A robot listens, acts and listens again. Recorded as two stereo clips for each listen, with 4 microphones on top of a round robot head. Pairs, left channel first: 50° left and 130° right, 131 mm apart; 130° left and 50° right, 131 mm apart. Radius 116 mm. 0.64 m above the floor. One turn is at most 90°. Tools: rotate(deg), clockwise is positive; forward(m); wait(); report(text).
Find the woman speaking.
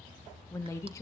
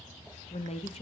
rotate(-90)
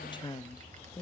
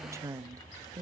report("Found it: a woman speaking, straight ahead.")